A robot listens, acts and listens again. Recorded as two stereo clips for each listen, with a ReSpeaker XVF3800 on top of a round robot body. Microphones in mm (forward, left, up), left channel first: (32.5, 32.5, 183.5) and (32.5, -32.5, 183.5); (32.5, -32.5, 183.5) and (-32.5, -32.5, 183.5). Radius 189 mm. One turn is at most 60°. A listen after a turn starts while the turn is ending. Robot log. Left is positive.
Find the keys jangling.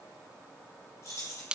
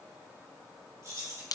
note: The keys jangling: 140° left.
cmd yaw +60
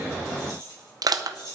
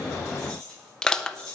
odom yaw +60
note: The keys jangling is now 85° left.
cmd yaw +60
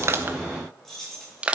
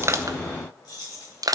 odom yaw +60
end: Found it: keys jangling, straight ahead, over 4 m away.